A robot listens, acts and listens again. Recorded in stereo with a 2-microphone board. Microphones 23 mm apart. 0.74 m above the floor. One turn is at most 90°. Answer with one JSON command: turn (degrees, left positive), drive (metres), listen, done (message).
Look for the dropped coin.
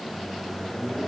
{"listen": true}
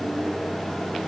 {"listen": true}
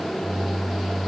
{"done": "I can't make out a dropped coin to turn to."}